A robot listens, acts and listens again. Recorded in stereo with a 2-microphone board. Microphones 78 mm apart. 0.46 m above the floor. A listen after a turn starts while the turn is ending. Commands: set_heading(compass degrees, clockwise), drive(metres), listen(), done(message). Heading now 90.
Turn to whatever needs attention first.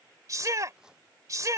set_heading(135)
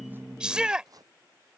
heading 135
set_heading(150)
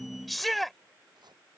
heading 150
done("Found it: a shout, straight ahead.")